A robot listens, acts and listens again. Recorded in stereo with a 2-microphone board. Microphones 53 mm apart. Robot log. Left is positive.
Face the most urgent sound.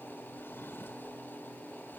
cmd idle
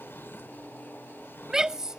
cmd yaw -30
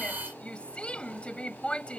note: So it is at 20° left.
cmd yaw +20
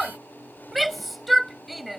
end: Facing the shout.